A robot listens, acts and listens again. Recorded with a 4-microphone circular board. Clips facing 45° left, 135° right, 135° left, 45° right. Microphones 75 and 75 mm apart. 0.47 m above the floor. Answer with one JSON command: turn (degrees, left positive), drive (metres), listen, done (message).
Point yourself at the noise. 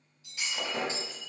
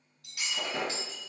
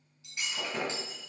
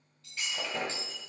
{"turn": -150}
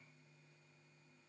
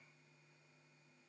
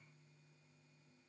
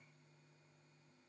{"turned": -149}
{"done": "Facing where the breaking glass came from. I can't hear it now."}